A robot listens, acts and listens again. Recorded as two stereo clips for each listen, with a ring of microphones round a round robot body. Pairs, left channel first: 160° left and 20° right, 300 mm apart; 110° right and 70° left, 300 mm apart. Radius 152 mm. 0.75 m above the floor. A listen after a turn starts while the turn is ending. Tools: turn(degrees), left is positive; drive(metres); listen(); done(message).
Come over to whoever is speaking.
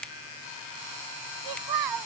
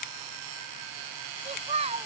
drive(metres=1.0)
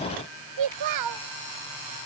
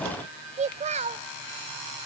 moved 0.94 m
drive(metres=1.0)
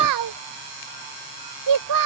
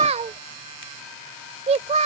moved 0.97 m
drive(metres=1.0)
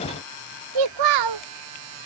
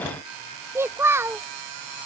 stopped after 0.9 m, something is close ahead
turn(degrees=-15)
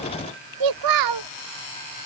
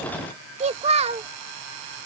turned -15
done("I am next to the child speaking.")